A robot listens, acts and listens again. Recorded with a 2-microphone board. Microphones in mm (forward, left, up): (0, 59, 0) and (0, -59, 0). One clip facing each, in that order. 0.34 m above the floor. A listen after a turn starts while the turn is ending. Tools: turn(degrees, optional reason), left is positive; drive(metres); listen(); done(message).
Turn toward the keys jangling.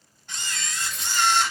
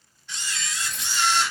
turn(degrees=-65, reason="The keys jangling: about 65° right or 115° right.")
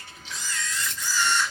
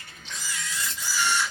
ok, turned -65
turn(degrees=-30, reason="So it is at 30° right.")
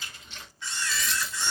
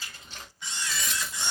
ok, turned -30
turn(degrees=-50, reason="The keys jangling is now 50° right.")
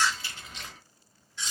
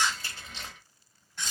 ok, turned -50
turn(degrees=-30, reason="The keys jangling is now 30° right.")
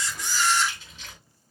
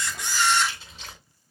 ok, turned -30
turn(degrees=-35, reason="The keys jangling is now 35° right.")
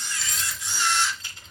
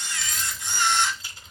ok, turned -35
turn(degrees=-10, reason="The keys jangling is now 10° right.")
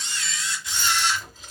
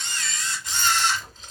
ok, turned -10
done("Facing the keys jangling, 1 to 2 m away.")